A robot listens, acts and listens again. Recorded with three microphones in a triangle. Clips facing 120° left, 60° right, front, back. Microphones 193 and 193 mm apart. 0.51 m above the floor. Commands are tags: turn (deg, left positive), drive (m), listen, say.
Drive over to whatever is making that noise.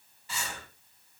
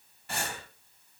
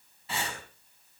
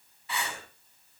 <turn deg="-60"/>
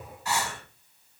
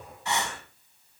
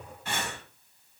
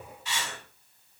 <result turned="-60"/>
<drive m="1.0"/>
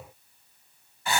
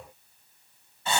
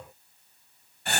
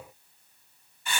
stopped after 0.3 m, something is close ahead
<say>Something is in my way. I am facing the breathing but have not reached it.</say>